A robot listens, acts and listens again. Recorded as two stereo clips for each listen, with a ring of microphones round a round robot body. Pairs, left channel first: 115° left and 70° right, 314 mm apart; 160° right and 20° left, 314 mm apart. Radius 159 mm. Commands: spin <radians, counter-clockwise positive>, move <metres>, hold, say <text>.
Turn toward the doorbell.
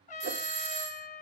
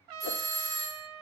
spin -0.96
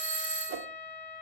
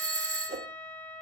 spin 0.26
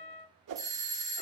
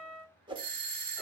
spin 0.17
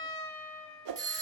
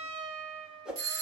say Facing the doorbell, 1 to 2 m away.